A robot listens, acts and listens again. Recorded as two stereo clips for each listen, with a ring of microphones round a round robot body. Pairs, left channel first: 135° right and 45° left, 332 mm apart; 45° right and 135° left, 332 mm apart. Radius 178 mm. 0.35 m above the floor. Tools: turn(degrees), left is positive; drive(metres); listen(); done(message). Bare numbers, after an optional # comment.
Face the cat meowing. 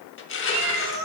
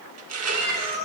# The cat meowing: 65° left.
turn(65)
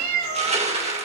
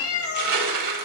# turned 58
done("Found it: a cat meowing, straight ahead.")